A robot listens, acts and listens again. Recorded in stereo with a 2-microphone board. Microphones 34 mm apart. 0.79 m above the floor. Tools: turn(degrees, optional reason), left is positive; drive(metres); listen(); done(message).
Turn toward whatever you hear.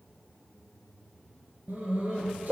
turn(degrees=-60, reason="The dog barking: about 60° right or 120° right.")
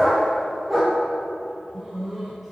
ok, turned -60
done("Found it: a dog barking, straight ahead, over 4 m away.")